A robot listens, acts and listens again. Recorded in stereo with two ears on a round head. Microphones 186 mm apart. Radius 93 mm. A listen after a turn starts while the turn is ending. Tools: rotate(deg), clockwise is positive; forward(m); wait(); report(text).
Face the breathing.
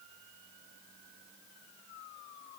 wait()
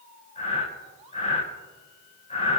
rotate(-35)
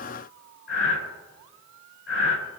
rotate(-110)
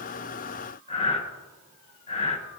rotate(-25)
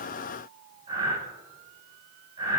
rotate(25)
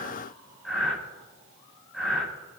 report("Found it: breathing, straight ahead.")